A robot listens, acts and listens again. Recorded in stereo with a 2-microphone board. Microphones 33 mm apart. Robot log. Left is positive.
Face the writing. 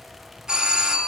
cmd idle
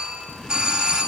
note: The writing: about 25° left or 155° left.
cmd yaw +25
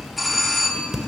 end: Found it: writing, straight ahead, 2 to 4 m away.